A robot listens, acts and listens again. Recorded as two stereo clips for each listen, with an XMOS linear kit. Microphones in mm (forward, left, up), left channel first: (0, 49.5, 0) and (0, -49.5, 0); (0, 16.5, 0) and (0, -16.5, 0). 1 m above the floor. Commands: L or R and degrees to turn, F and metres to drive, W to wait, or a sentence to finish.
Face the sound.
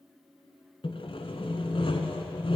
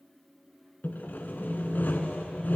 L65
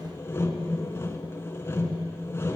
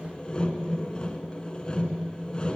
L30
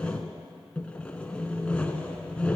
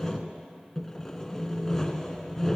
L15
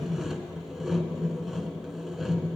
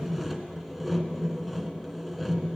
Facing the sawing, 1 to 2 m away.